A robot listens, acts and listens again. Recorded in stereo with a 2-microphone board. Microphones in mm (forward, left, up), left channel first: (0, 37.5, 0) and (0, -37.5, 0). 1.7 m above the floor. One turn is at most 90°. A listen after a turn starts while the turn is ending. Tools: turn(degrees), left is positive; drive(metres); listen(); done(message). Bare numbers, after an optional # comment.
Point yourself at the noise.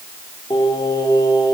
turn(90)
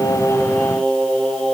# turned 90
# So it is at 15° left.
turn(15)
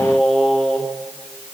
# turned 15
done("Found it: singing, straight ahead.")